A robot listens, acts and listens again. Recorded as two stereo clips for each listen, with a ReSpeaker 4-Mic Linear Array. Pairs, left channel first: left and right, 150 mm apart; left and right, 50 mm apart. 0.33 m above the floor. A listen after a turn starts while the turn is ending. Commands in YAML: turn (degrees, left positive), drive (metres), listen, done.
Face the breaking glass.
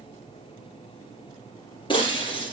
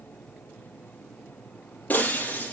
turn: 30
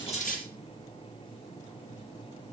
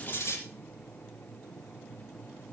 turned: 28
listen: true
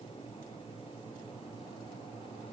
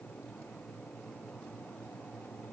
done: "I heard breaking glass, but can't make it out now. It was about 5° left or 120° left."